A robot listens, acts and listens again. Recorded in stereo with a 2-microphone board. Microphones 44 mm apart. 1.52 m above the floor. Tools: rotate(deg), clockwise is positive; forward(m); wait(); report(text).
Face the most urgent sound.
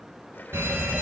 rotate(70)
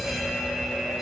report("Found it: a fire alarm, straight ahead, 2 to 4 m away.")